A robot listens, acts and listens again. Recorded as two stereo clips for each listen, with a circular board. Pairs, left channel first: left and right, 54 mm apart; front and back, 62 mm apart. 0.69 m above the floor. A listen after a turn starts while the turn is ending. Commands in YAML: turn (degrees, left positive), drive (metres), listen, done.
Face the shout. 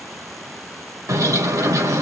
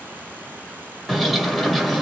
listen: true
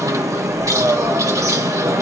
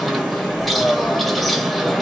listen: true
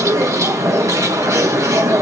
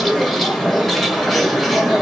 done: "I can't make out a shout to turn to."